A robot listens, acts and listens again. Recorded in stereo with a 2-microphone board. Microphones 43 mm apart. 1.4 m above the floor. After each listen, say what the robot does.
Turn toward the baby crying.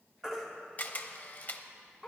Turn 30° right.
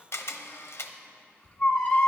Turn 25° left.
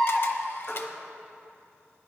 Turn 10° left.
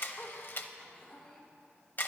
Keep listening.
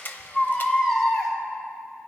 Found it: a baby crying, straight ahead.